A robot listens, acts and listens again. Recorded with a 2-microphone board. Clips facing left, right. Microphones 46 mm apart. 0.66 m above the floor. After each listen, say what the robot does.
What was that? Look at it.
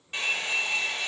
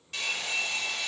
Turn 25° left.
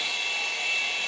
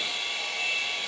Facing the hair dryer.